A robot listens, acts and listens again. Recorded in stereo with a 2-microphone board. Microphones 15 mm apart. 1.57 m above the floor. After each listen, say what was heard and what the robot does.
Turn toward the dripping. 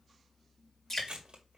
The dripping: about 25° left or 155° left. Turn 25° left.
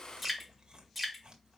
Facing the dripping, 2 to 4 m away.